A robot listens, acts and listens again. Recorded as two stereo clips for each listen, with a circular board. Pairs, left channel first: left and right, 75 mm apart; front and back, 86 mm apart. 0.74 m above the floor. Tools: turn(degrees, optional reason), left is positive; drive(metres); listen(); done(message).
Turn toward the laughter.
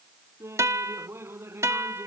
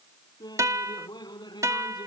turn(degrees=-35, reason="The laughter: 35° right.")
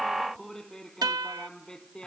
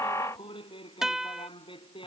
turn(degrees=10, reason="The laughter is now 10° left.")
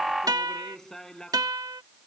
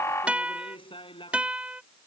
done("Found it: laughter, straight ahead.")